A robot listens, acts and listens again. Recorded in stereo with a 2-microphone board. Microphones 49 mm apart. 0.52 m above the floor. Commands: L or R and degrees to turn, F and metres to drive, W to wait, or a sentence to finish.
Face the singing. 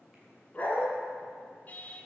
L30
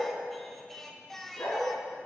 Facing the singing, under 1 m away.